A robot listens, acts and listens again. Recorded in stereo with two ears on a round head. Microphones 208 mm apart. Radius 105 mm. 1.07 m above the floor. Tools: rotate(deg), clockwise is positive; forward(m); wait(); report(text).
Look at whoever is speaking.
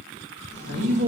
rotate(55)
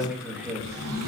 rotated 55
report("Facing the man speaking.")